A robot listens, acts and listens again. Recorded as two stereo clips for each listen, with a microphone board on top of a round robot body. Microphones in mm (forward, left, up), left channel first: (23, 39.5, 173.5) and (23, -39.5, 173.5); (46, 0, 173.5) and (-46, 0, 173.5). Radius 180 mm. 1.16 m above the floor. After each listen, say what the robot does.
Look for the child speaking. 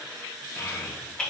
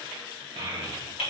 Turn 150° left.
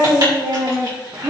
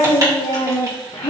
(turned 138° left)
Turn 40° right.
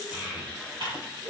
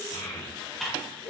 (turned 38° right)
Turn 20° right.
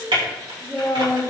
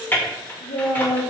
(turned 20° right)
Found it: a child speaking, straight ahead, 2 to 4 m away.